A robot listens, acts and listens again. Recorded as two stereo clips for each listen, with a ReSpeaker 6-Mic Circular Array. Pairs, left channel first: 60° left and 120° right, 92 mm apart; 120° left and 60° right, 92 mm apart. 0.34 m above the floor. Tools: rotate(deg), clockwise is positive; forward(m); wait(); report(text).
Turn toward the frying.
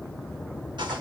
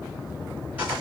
wait()
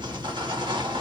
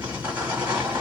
wait()
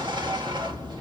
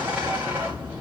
report("I can't make out frying to turn to.")